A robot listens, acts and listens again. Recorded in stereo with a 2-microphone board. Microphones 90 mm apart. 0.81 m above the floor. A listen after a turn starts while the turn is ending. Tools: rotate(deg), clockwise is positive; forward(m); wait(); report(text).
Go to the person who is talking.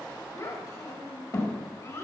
rotate(-35)
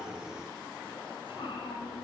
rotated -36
wait()
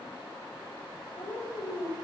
rotate(-110)
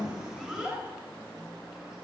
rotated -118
rotate(10)
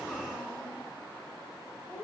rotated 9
forward(1.0)
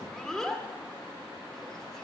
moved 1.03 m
forward(1.0)
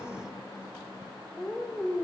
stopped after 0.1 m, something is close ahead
report("Arrived at the child speaking, straight ahead.")